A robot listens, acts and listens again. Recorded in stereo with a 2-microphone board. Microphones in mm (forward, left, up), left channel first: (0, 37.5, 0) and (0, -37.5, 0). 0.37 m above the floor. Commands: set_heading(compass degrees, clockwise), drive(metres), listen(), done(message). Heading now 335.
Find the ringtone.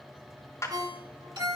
set_heading(30)
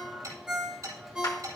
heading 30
set_heading(40)
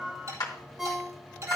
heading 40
done("Facing the ringtone, 2 to 4 m away.")